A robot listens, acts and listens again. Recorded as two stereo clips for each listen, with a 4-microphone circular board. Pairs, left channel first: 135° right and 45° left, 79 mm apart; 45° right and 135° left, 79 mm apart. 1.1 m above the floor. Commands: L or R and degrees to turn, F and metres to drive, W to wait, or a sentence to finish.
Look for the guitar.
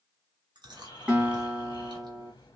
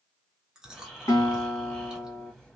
R30
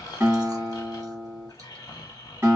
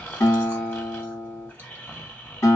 R10
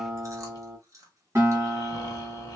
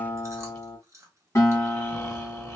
Found it: a guitar, straight ahead, 1 to 2 m away.